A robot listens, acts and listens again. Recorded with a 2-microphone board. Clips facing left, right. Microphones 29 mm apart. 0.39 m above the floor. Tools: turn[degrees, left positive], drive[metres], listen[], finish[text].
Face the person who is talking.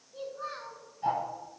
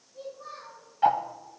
Thought: The child speaking: about 65° left or 115° left.
Action: turn[65]
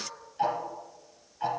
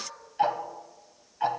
Thought: So it is at 50° left.
Action: turn[50]
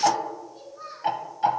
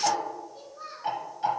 Action: finish[Found it: a child speaking, straight ahead.]